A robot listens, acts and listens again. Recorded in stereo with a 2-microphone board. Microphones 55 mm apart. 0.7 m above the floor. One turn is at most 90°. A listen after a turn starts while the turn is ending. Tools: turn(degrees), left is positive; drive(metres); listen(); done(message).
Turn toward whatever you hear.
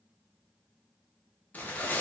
turn(degrees=30)
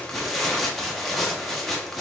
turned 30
done("Facing the tearing paper.")